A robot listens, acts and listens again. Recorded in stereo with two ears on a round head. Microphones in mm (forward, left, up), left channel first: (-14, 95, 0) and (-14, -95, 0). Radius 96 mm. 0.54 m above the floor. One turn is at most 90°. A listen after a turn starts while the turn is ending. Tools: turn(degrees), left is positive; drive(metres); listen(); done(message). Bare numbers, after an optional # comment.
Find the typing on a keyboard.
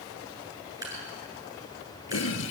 listen()
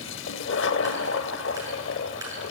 listen()
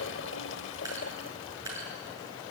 done("I can't make out typing on a keyboard, only a toilet flushing and dripping.")